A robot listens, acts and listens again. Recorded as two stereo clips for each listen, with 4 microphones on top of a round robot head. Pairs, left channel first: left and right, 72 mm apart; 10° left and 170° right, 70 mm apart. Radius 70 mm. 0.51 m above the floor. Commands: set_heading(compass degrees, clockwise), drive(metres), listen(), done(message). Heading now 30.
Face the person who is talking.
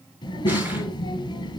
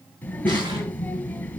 set_heading(315)
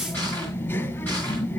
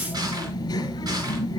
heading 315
set_heading(280)
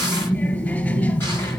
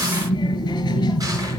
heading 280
set_heading(255)
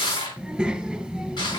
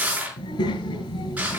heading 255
done("Facing the child speaking, 2 to 4 m away.")